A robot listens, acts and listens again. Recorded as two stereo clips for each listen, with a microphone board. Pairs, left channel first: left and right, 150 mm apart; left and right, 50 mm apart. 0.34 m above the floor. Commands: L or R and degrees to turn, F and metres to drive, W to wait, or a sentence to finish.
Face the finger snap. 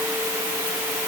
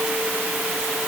W
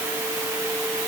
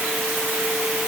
W
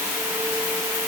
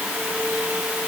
I can't make out a finger snap to turn to.